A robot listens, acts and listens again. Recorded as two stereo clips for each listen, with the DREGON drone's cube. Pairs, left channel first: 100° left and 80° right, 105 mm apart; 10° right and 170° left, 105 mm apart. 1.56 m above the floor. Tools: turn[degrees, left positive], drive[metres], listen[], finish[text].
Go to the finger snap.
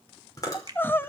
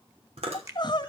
Thought: The finger snap: 130° right.
Action: turn[-130]
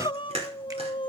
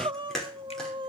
Action: listen[]
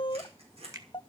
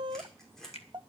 Thought: The finger snap is now 25° right.
Action: turn[-25]
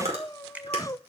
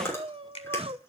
Action: drive[1.0]
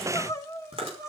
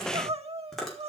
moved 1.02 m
Action: listen[]
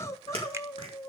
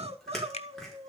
Action: listen[]
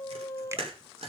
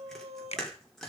Thought: The finger snap is now 15° right.
Action: turn[-15]
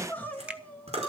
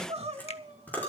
Action: drive[1.0]
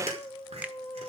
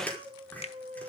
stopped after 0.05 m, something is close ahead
Action: finish[Arrived at the finger snap, straight ahead.]